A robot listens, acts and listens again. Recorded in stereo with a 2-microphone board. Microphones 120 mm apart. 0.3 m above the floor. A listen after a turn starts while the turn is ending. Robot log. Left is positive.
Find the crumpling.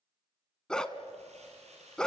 note: The crumpling: about 65° right or 115° right.
cmd yaw -65
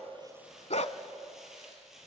end: Found it: crumpling, straight ahead, over 4 m away.